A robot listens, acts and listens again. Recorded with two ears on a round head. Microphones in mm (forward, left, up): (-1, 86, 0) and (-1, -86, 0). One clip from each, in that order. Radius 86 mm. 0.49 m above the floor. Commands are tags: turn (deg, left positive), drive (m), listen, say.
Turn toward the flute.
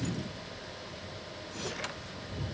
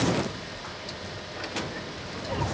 <listen/>
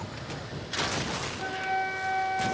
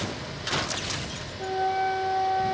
<turn deg="70"/>
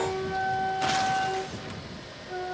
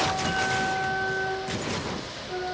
<say>Found it: a flute, straight ahead.</say>